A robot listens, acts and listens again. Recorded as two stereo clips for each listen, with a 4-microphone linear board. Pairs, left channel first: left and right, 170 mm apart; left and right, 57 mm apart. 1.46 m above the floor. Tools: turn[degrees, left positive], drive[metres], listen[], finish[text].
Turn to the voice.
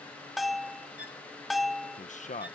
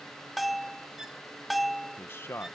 Thought: The man speaking: about 45° left or 135° left.
Action: turn[45]
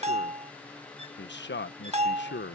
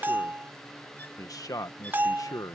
Thought: So it is at 95° left.
Action: turn[95]
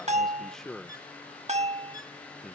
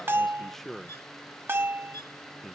Action: finish[Facing the man speaking.]